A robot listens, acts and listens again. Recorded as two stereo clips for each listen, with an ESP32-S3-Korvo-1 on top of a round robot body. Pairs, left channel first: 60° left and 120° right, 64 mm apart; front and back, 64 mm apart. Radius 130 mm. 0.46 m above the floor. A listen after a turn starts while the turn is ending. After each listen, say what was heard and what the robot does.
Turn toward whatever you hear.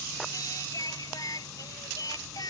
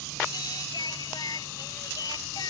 The singing: 30° left. Turn 30° left.
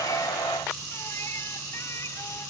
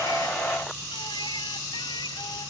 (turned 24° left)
Keep listening.
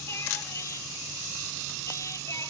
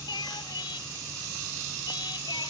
The singing is now 15° left. Turn 15° left.
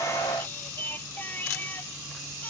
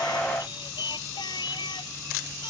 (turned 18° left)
Facing the singing.